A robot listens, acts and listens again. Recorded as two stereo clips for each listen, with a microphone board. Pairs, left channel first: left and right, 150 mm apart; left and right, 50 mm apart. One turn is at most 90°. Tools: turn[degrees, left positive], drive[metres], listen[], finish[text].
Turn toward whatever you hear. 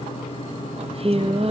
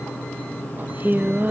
Thought: The singing: about 40° right or 140° right.
Action: turn[-40]
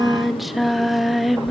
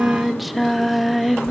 Action: finish[Facing the singing.]